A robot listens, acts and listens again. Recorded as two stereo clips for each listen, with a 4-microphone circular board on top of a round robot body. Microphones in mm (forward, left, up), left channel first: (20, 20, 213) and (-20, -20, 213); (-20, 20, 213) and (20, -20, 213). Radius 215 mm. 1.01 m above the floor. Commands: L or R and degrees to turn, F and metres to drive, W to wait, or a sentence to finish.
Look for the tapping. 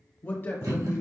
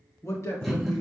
L180
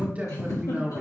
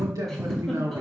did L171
L10
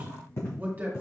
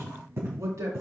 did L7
Found it: tapping, straight ahead, 2 to 4 m away.